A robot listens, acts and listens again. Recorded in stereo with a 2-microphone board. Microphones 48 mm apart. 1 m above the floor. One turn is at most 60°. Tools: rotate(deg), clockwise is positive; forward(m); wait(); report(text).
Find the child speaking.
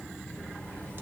wait()
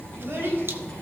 rotate(50)
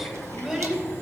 report("Found it: a child speaking, straight ahead.")